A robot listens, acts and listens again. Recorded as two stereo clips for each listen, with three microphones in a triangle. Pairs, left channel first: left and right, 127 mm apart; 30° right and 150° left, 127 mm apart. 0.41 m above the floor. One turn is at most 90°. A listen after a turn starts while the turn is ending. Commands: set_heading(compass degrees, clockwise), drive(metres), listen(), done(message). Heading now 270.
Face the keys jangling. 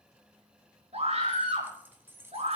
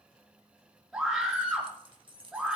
set_heading(0)
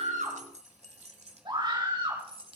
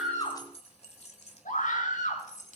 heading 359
set_heading(44)
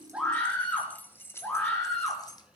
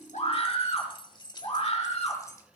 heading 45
set_heading(10)
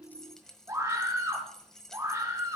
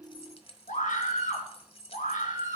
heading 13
done("Found it: keys jangling, straight ahead, 1 to 2 m away.")